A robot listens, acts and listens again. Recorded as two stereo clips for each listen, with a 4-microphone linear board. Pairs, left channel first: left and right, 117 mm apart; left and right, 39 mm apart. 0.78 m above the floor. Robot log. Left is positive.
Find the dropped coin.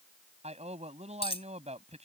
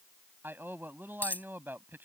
note: The dropped coin: about 55° left or 125° left.
cmd yaw +55
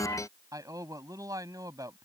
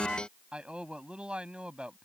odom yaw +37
cmd idle
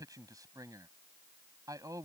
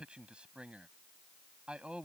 end: I heard a dropped coin, but can't make it out now. It was about 20° left or 90° left.